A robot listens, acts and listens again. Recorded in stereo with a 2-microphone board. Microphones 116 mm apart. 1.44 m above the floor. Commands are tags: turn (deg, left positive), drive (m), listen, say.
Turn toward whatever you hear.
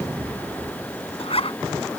<turn deg="55"/>
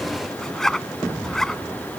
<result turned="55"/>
<say>Found it: a zipper, straight ahead.</say>